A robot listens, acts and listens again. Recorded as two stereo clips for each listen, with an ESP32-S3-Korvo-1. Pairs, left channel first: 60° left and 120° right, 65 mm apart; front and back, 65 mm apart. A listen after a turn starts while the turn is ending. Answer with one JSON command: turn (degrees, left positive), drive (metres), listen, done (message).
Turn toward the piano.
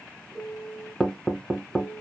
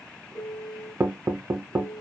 {"turn": -35}
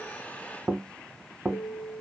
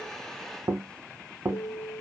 {"done": "Facing the piano."}